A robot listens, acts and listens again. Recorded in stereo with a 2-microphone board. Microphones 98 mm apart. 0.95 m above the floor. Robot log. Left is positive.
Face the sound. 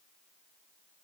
cmd idle
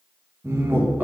note: The laughter: about 20° right or 160° right.
cmd yaw -20
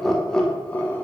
note: So it is at 20° left.
cmd yaw +20
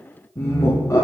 note: The laughter is now 35° left.
cmd yaw +35
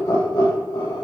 note: The laughter is now 45° left.
cmd yaw +45
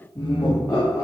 note: The laughter is now 25° left.
cmd yaw +25
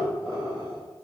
end: Facing the laughter, 2 to 4 m away.